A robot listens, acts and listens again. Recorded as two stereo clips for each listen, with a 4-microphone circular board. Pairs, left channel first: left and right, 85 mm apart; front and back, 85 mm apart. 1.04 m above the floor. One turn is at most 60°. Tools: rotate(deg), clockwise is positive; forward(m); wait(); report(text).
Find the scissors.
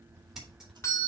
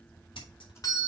report("Found it: scissors, straight ahead.")